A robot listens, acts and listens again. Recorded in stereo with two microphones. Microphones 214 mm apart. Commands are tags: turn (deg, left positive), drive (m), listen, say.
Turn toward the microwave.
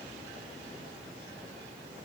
<listen/>
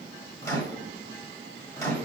<turn deg="30"/>
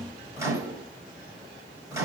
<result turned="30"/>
<turn deg="-15"/>
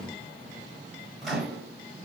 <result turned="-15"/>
<say>Facing the microwave, 1 to 2 m away.</say>